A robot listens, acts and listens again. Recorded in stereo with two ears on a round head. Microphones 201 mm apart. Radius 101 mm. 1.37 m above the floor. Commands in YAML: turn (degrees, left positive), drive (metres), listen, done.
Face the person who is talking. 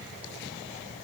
listen: true
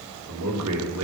turn: -90
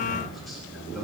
done: "Found it: a man speaking, straight ahead."